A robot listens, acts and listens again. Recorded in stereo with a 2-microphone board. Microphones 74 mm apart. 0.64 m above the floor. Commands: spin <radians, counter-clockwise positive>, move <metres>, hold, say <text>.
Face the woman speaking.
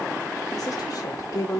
spin 0.96
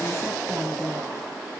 hold
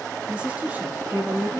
spin -0.52
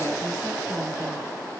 hold
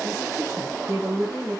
spin -0.70
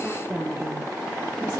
spin -0.26
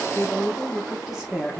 say Facing the woman speaking.